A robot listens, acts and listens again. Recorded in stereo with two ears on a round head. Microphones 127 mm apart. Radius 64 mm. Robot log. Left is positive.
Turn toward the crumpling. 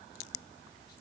cmd idle
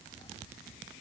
cmd idle
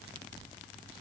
end: I can't make out crumpling to turn to.